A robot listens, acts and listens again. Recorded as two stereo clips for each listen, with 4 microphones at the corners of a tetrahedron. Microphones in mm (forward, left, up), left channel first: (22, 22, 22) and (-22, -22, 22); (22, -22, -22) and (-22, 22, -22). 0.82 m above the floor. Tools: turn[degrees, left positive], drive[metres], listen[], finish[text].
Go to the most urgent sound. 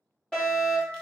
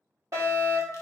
Thought: The fire alarm: 120° left.
Action: turn[120]
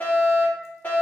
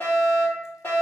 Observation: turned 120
Action: drive[1.0]
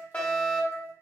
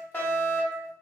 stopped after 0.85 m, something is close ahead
Action: finish[I am next to the fire alarm.]